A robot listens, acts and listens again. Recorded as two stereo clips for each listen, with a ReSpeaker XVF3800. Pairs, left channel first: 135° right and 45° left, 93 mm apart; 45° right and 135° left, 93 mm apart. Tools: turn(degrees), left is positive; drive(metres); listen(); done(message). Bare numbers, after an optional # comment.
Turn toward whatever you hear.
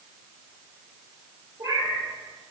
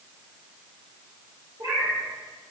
# The cat meowing: 95° left.
turn(95)
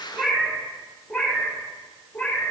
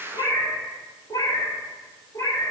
# The cat meowing is now 70° right.
turn(-70)
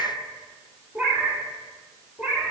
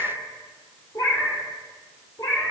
# The cat meowing is now 25° right.
turn(-25)
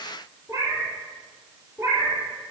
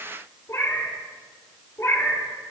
done("Found it: a cat meowing, straight ahead, 1 to 2 m away.")